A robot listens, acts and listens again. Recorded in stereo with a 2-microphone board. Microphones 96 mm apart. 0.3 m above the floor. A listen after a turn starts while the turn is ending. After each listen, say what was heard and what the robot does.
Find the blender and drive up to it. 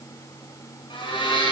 The blender: about 65° left or 115° left. Turn 65° left.
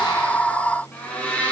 So it is at 15° left. Turn 15° left.
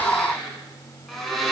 Drive 1.0 m forward.
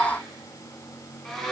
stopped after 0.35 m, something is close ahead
Something is in my way. I am facing the blender but have not reached it.